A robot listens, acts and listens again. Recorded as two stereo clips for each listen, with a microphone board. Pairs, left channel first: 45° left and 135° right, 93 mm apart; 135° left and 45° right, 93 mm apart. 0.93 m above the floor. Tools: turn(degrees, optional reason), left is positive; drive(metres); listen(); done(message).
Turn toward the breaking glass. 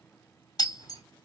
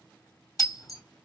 turn(degrees=85, reason="The breaking glass: 85° left.")
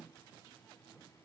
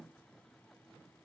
done("Facing where the breaking glass came from. I can't hear it now.")